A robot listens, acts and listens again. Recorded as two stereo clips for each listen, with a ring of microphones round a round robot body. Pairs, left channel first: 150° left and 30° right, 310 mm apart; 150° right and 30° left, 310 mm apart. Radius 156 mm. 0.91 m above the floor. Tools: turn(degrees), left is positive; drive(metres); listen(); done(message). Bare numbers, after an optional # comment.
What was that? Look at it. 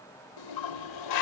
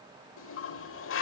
# The toilet flushing: 160° left.
turn(160)
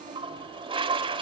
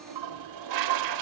# The toilet flushing is now 45° left.
turn(45)
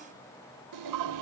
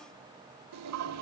done("Found it: a toilet flushing, straight ahead, 1 to 2 m away.")